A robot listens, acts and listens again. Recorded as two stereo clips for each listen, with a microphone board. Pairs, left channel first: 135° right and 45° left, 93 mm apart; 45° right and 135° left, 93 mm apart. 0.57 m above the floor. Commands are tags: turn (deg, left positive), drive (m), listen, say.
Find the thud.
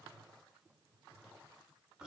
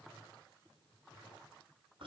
<listen/>
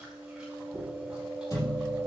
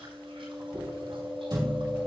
<turn deg="175"/>
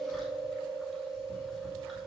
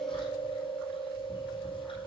<say>I heard a thud from this way, but can't make it out now.</say>